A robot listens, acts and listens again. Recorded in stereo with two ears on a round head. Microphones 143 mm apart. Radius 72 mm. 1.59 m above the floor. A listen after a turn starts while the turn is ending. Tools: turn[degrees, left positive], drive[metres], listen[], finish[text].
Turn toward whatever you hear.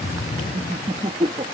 Thought: The laughter: about 35° right or 145° right.
Action: turn[-35]
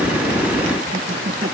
Action: listen[]
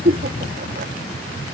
Thought: So it is at 120° right.
Action: turn[-120]
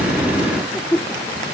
Action: finish[Found it: laughter, straight ahead.]